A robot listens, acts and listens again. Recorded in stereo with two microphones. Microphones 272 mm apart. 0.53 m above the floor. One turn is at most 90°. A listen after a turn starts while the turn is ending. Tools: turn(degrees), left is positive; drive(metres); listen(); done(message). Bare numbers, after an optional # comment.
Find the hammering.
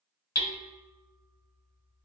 # The hammering: about 70° left or 110° left.
turn(70)
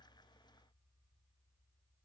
listen()
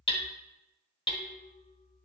# So it is at 20° left.
turn(20)
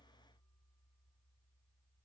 listen()
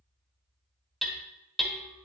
done("Facing the hammering.")